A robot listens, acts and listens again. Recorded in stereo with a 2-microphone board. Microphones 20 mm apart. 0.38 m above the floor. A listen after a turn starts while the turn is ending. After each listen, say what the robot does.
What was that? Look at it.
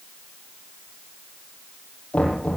Turn 90° left.
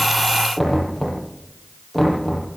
Facing the knocking.